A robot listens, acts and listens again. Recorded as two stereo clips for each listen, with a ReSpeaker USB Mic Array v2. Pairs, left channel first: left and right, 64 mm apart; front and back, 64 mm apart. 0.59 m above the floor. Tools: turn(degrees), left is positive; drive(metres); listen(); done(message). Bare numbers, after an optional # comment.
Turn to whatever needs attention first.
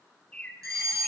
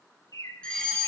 # The fire alarm: 75° right.
turn(-75)
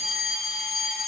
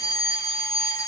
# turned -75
done("Facing the fire alarm, over 4 m away.")